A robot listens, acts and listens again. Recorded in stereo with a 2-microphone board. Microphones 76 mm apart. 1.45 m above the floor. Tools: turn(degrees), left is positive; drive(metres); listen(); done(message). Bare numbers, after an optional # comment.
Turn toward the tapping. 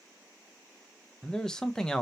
listen()
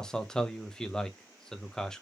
listen()
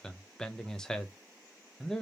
done("I can't make out tapping, only a man speaking.")